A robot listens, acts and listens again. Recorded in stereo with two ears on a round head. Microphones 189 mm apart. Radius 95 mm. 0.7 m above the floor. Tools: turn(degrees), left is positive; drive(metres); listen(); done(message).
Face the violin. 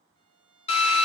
turn(degrees=20)
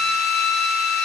listen()
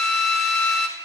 listen()
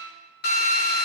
done("I heard a violin, but can't make it out now. It was about straight ahead or 140° left.")